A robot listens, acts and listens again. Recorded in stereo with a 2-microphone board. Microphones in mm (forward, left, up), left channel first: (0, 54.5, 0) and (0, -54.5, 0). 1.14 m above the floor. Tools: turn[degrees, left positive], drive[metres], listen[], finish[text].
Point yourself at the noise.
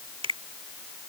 Thought: The finger snap: about 60° right or 120° right.
Action: turn[-60]
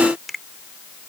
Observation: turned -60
Action: finish[Found it: a finger snap, straight ahead.]